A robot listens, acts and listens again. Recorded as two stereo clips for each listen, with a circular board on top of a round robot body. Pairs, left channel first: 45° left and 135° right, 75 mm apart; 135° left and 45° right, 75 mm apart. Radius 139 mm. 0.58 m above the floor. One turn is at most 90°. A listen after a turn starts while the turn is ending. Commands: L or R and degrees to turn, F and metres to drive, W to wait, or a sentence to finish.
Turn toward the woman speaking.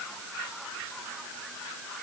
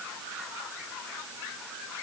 W
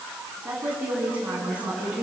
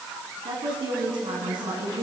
R65
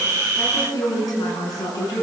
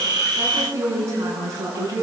Facing the woman speaking, over 4 m away.